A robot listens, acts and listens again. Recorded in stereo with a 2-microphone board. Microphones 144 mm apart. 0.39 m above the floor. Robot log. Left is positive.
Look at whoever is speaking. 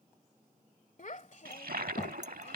note: The child speaking: about 60° left or 120° left.
cmd yaw +60
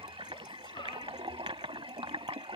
cmd idle
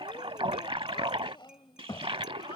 note: So it is at 40° left.
cmd yaw +40
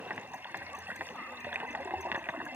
cmd idle
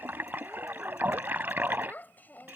note: The child speaking is now 15° left.
cmd yaw +15
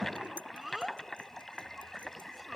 end: Facing the child speaking.